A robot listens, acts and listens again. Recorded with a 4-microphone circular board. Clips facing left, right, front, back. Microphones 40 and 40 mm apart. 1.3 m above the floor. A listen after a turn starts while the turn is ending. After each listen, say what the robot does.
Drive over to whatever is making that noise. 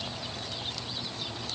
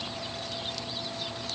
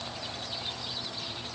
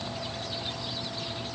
Keep listening.
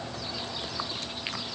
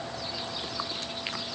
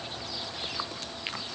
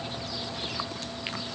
Keep listening.
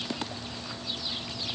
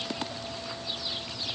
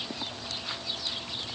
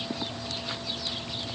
I can't make out anything.